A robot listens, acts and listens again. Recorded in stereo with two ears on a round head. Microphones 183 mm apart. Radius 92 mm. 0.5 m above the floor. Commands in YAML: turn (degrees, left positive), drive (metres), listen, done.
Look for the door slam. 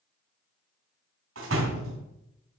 turn: -90
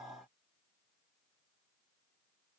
done: "Facing where the door slam came from. I can't hear it now."